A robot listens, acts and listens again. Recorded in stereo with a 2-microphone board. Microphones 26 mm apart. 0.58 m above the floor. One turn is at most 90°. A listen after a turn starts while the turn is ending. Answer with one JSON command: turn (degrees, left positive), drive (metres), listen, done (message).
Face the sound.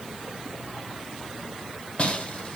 {"turn": 60}
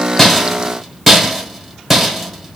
{"done": "Facing the rattle, 1 to 2 m away."}